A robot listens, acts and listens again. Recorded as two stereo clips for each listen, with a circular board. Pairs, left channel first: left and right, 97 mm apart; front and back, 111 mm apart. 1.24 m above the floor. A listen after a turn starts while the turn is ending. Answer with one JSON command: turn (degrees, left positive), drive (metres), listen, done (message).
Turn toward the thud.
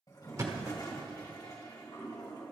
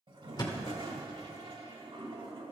{"turn": -40}
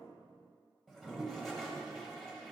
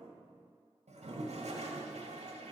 {"done": "Facing where the thud came from. I can't hear it now."}